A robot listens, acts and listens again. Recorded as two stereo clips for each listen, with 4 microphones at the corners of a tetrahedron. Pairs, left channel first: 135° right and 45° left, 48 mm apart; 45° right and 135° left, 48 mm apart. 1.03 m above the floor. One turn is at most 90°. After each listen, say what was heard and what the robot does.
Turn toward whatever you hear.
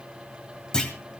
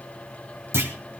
The clunk: 150° left. Turn 90° left.
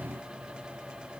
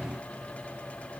Nothing new. It was at 60° left. Turn 60° left.
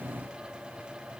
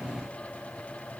I heard a clunk from this way, but can't make it out now.